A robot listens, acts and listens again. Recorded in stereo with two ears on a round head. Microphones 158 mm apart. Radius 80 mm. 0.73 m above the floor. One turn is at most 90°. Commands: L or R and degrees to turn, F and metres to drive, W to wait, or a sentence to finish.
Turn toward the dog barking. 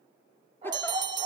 R35
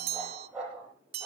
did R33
R10
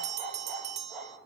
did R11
Found it: a dog barking, straight ahead.